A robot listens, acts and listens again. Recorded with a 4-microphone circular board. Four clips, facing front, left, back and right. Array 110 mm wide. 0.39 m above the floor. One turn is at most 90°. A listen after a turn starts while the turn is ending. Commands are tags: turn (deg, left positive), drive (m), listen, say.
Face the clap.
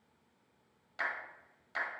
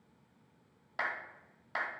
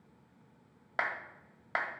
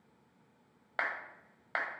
<turn deg="-90"/>
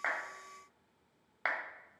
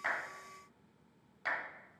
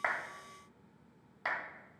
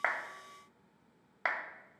<turn deg="-55"/>
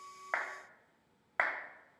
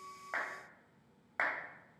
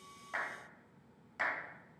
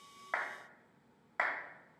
<say>Found it: a clap, straight ahead.</say>